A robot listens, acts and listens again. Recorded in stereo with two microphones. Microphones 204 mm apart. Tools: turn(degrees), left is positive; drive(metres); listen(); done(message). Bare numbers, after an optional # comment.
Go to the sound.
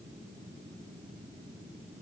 listen()
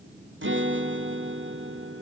# The guitar: about 70° right or 110° right.
turn(-70)
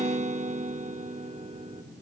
# So it is at 35° right.
turn(-35)
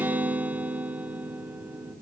# The guitar is now 10° right.
turn(-10)
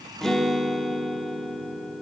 drive(1.0)
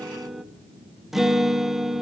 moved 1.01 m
drive(1.0)
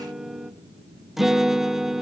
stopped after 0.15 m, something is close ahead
done("Arrived at the guitar, straight ahead.")